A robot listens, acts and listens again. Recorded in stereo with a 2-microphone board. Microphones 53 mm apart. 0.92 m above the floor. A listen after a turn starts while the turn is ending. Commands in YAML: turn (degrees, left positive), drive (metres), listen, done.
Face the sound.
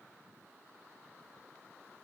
listen: true
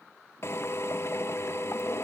turn: 55
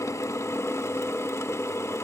turn: 65
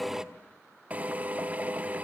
turn: -30
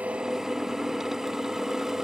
turn: -10
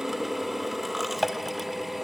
done: "Found it: a drill, straight ahead."